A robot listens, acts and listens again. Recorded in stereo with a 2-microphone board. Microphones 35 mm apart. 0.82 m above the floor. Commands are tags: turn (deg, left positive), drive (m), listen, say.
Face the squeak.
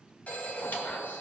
<turn deg="65"/>
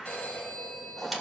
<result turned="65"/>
<say>Found it: a squeak, straight ahead.</say>